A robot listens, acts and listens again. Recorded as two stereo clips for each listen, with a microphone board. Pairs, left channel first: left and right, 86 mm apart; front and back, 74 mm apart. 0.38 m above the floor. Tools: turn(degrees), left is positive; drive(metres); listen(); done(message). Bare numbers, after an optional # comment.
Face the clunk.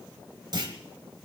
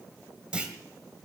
# The clunk: 105° right.
turn(-105)
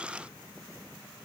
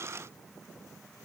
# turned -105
done("Facing where the clunk came from. I can't hear it now.")